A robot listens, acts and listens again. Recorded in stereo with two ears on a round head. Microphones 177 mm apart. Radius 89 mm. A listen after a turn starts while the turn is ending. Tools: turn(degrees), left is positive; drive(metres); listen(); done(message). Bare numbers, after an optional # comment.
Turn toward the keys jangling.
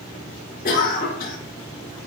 listen()
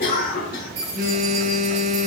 # The keys jangling: about 35° right or 145° right.
turn(-35)
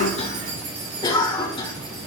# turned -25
# So it is at 110° right.
turn(-110)
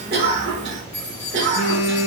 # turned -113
# The keys jangling is now 15° left.
turn(15)
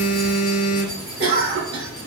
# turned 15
listen()
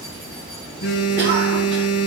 listen()
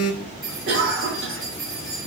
done("Facing the keys jangling, over 4 m away.")